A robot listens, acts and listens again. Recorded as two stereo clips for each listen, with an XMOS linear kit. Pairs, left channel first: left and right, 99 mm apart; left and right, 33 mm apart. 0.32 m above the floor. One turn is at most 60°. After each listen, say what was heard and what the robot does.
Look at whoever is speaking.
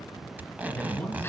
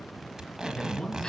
The man speaking: about 15° left or 165° left. Turn 15° left.
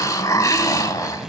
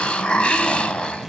Keep listening.
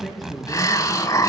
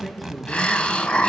Found it: a man speaking, straight ahead, over 4 m away.